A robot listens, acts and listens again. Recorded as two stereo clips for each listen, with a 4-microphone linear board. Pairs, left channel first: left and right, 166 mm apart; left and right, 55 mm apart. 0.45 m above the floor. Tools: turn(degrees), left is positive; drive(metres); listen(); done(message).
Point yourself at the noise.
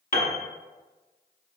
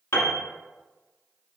turn(degrees=55)
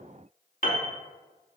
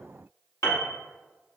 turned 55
turn(degrees=65)
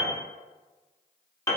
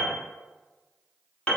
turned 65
turn(degrees=20)
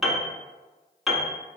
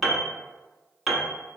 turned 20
done("Facing the piano.")